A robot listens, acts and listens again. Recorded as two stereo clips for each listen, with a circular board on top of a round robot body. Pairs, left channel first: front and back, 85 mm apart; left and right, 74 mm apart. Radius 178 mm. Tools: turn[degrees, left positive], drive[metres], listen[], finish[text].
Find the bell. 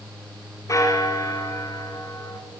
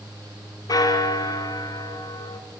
Thought: The bell: 55° left.
Action: turn[55]
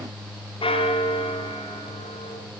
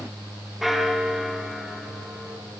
Action: finish[Found it: a bell, straight ahead, 2 to 4 m away.]